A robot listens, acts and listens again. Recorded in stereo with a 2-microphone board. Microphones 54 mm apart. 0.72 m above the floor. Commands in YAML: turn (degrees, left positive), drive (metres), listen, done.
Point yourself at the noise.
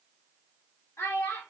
turn: 60
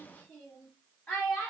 turn: 15
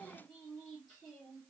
turn: 10
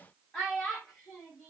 done: "Found it: a child speaking, straight ahead, 1 to 2 m away."